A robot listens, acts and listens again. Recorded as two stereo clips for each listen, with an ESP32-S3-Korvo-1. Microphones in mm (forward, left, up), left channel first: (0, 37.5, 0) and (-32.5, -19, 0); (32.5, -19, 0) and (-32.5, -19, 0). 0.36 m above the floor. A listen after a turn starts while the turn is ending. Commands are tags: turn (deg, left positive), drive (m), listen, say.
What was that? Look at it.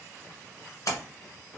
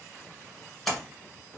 <turn deg="90"/>
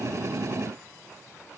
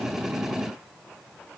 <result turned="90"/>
<say>Facing where the splash came from. I can't hear it now.</say>